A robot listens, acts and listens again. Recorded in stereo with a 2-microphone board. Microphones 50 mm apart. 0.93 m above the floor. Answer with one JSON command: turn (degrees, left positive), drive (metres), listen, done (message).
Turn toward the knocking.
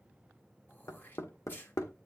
{"turn": 90}
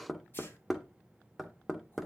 {"done": "Facing the knocking."}